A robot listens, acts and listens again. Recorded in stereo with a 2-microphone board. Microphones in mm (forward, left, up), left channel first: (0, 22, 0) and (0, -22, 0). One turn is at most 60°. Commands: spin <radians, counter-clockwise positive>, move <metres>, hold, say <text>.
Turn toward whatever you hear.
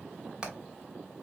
spin -0.35
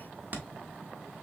spin -1.05
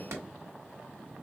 spin -1.05
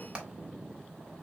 spin -0.44
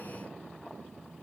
hold
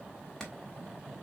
spin 0.26
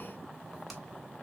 say Found it: hammering, straight ahead, 1 to 2 m away.